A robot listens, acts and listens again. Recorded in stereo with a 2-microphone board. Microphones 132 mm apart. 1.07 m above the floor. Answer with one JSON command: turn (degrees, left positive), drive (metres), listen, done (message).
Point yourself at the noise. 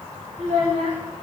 {"turn": -65}
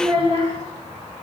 {"turn": -45}
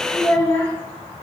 {"turn": 20}
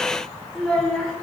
{"done": "Facing the child speaking, 1 to 2 m away."}